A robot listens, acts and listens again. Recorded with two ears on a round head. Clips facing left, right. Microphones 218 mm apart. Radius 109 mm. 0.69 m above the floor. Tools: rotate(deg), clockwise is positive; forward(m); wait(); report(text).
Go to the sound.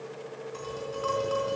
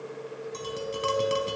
rotate(45)
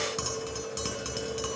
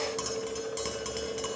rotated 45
forward(1.0)
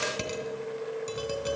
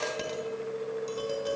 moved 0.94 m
rotate(-10)
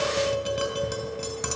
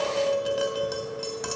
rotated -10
forward(1.0)
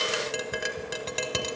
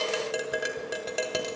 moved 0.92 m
forward(1.0)
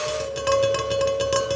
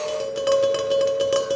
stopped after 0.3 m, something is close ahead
report("Arrived at the tapping, straight ahead.")